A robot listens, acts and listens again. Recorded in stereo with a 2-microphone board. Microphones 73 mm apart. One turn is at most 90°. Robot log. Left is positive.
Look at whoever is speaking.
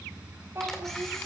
note: The child speaking: about 35° right or 145° right.
cmd yaw -35
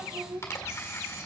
note: So it is at 110° right.
cmd yaw -90
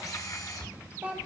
note: The child speaking is now 20° right.
cmd yaw -20
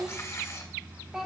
note: The child speaking is now 10° right.
cmd yaw -10
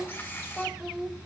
end: Facing the child speaking, 1 to 2 m away.